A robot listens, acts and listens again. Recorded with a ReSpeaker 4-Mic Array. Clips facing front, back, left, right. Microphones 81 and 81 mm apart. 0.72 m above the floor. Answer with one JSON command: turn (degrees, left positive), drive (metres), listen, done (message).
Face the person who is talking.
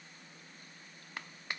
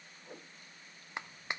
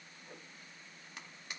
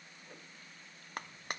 {"listen": true}
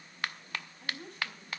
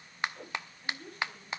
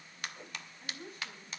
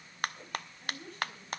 {"done": "Facing the woman speaking."}